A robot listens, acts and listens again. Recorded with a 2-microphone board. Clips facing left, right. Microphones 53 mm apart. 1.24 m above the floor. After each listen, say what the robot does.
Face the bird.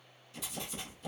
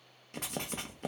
Keep listening.
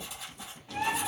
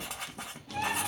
Turn 30° left.
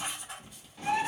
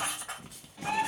Facing the bird.